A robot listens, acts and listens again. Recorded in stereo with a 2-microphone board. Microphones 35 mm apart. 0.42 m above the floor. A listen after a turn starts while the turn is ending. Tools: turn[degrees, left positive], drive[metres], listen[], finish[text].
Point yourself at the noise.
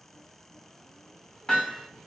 Thought: The hammering: about 15° left or 165° left.
Action: turn[15]
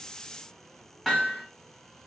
Action: finish[Found it: hammering, straight ahead.]